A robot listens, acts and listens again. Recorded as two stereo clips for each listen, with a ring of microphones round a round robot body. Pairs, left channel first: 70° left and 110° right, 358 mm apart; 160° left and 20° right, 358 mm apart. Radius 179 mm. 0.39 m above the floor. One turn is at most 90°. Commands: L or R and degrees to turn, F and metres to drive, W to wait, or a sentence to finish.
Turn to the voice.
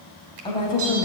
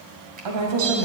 R15
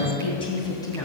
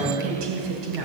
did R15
R15
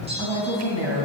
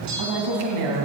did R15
R10
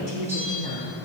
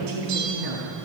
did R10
Found it: a woman speaking, straight ahead, over 4 m away.